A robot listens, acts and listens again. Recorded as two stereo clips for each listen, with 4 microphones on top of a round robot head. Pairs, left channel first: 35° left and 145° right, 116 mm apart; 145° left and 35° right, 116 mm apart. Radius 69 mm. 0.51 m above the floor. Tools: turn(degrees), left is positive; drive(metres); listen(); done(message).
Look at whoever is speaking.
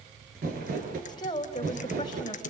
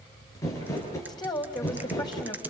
turn(degrees=90)
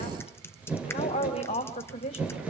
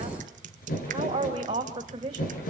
turn(degrees=15)
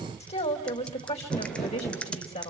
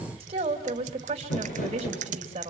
done("Facing the woman speaking.")